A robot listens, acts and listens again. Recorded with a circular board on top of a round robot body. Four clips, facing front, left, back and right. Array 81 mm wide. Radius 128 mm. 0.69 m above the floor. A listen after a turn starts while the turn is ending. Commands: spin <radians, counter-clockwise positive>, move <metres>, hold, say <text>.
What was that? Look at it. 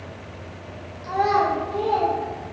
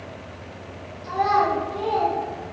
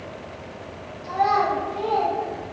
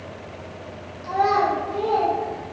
spin -0.52
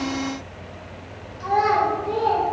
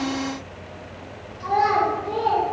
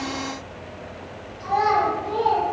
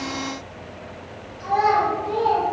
spin 0.17
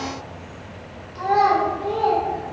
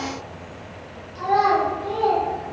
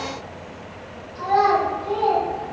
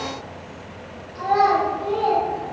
say Found it: a child speaking, straight ahead.